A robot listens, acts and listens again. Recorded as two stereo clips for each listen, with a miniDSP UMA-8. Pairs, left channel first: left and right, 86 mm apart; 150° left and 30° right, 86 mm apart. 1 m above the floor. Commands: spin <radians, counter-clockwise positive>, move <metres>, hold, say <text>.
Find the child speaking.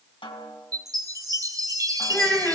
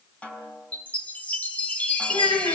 spin 2.97
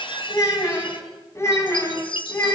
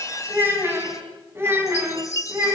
spin 0.44
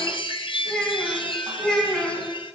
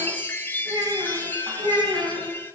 say Found it: a child speaking, straight ahead, over 4 m away.